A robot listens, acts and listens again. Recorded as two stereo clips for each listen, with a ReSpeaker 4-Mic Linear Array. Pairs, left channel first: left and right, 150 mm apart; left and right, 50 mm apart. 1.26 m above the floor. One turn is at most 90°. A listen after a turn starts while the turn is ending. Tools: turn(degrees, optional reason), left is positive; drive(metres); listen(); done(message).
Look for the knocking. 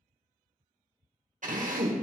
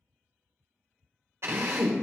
listen()
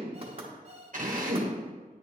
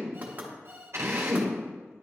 turn(degrees=-40, reason="The knocking: about 40° right or 140° right.")
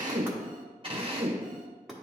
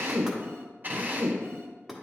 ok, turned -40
done("Found it: knocking, straight ahead.")